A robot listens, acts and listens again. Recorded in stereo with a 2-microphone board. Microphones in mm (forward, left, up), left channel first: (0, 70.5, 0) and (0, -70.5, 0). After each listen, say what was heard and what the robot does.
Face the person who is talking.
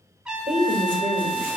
The woman speaking: about 45° right or 135° right. Turn 45° right.
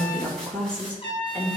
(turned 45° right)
So it is at 20° left. Turn 20° left.
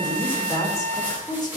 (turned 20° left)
The woman speaking is now 30° left. Turn 30° left.
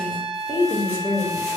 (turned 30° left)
The woman speaking is now 15° left. Turn 15° left.
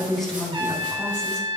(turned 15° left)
Found it: a woman speaking, straight ahead.